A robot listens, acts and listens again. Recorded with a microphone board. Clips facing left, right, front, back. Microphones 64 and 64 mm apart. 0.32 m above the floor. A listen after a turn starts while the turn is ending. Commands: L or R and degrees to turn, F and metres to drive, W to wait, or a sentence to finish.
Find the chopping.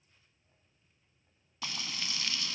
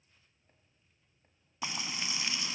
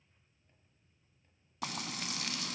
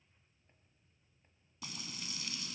W
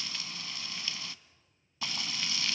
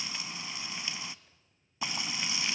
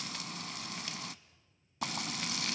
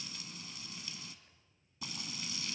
W
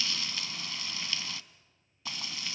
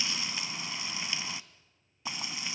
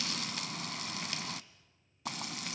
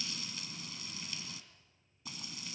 I can't make out chopping, only frying.